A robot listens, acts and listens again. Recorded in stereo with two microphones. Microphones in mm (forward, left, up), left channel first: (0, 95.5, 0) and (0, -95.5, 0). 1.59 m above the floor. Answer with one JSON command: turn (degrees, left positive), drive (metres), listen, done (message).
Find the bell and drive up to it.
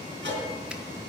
{"turn": -75}
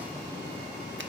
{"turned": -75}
{"listen": true}
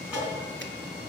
{"drive": 1.0}
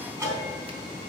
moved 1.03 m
{"turn": -15}
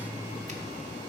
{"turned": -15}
{"drive": 1.0}
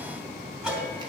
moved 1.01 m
{"drive": 1.0}
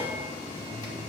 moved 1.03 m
{"drive": 1.0}
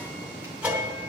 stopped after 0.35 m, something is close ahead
{"turn": -10}
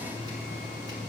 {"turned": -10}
{"done": "I am next to the bell."}